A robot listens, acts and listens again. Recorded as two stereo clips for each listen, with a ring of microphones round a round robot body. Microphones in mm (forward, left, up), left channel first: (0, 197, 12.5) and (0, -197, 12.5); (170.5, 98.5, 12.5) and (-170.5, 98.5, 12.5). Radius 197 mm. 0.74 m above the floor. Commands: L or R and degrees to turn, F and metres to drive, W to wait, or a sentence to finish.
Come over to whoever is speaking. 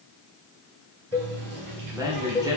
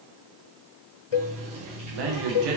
R170
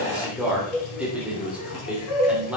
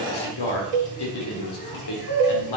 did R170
F1.0
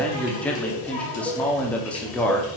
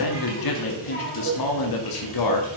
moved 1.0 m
F1.0
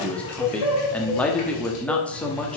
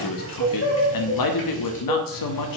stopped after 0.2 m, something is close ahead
Arrived at the man speaking, straight ahead.